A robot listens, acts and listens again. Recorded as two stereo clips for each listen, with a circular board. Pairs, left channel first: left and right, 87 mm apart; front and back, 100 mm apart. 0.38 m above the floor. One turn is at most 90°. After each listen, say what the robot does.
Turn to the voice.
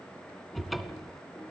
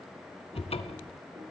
Keep listening.
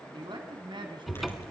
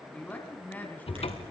Turn 75° right.
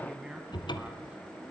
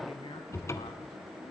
Keep listening.
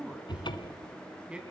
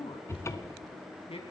Turn 10° right.
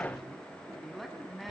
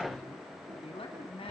Found it: a man speaking, straight ahead, 2 to 4 m away.